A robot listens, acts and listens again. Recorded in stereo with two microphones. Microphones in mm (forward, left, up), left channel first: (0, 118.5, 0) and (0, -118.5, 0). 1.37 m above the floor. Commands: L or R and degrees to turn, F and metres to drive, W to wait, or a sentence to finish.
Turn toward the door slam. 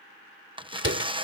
R55
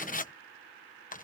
W
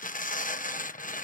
I heard a door slam, but can't make it out now. It was about straight ahead or 70° right.